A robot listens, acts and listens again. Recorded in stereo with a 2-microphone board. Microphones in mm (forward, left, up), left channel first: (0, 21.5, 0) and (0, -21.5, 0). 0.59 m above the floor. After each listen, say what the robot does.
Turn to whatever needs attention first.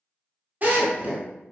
Keep listening.
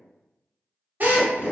Keep listening.
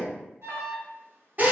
Turn 70° right.
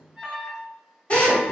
Turn 15° right.
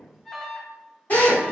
Found it: an alarm, straight ahead.